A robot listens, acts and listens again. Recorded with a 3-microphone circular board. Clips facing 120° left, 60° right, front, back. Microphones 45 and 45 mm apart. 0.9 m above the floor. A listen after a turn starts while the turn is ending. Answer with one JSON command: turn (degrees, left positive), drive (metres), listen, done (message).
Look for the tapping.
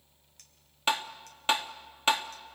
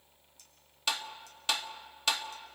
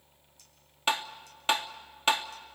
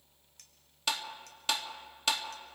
{"turn": 60}
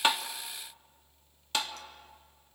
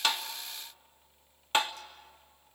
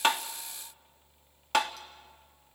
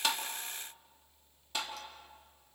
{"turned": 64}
{"done": "Facing the tapping."}